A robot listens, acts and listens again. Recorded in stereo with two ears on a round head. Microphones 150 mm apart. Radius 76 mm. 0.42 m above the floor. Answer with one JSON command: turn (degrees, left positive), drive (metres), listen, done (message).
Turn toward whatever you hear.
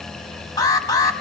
{"turn": 20}
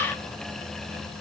{"listen": true}
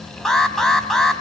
{"done": "Found it: an alarm, straight ahead."}